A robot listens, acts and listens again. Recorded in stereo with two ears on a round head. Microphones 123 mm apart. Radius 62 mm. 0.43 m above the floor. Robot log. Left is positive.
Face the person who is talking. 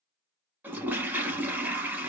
cmd idle
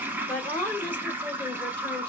cmd yaw +30
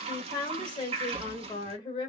note: So it is at 135° left.
cmd yaw +135
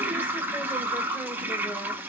cmd idle
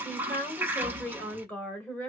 note: The woman speaking is now 15° left.
cmd yaw +15
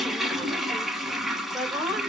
end: Facing the woman speaking.